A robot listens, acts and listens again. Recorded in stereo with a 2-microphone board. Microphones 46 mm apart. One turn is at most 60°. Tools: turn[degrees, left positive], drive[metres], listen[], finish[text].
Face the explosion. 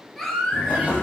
Thought: The explosion: about 35° left or 145° left.
Action: turn[35]
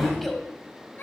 Action: finish[Found it: an explosion, straight ahead.]